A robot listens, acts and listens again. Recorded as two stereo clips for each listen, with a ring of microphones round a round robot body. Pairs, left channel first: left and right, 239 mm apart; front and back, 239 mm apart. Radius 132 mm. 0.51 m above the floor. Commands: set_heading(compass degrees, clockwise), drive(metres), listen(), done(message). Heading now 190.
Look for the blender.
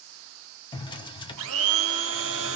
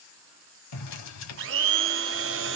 set_heading(320)
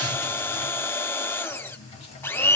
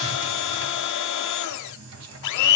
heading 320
set_heading(310)
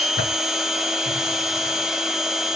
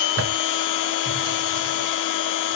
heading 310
done("Facing the blender.")